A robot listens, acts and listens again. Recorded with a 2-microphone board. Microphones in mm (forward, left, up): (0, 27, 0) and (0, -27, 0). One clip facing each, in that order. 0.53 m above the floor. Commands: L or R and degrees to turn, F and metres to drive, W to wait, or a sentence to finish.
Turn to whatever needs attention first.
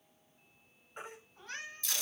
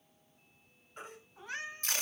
L20
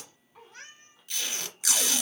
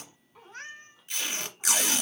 Facing the baby crying.